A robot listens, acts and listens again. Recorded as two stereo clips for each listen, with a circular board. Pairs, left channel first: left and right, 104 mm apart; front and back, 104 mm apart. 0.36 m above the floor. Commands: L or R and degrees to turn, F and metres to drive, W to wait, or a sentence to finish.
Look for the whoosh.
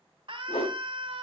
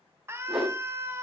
L95
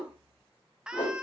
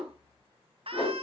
L40
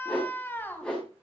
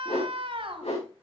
L10
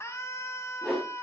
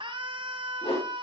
Facing the whoosh.